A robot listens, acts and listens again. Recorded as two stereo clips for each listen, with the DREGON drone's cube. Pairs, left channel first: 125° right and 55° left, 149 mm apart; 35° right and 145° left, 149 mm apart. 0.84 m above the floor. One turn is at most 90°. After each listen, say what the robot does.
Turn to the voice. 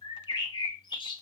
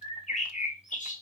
Keep listening.
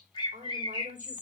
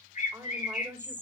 Turn 75° left.
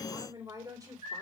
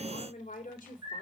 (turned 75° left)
Turn 10° right.
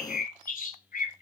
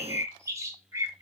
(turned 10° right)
Keep listening.
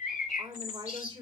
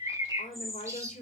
Facing the woman speaking, 2 to 4 m away.